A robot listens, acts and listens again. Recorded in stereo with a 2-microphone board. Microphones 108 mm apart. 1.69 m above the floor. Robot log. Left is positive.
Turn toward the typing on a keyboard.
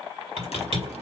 cmd yaw -90
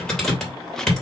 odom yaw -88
end: Facing the typing on a keyboard, 2 to 4 m away.